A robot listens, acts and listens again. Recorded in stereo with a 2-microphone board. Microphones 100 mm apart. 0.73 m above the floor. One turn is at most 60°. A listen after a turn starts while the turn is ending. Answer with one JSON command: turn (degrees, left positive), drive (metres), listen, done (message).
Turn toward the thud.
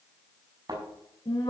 {"turn": -45}
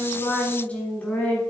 {"listen": true}
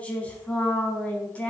{"done": "I heard a thud, but can't make it out now. It was about straight ahead or 90° right."}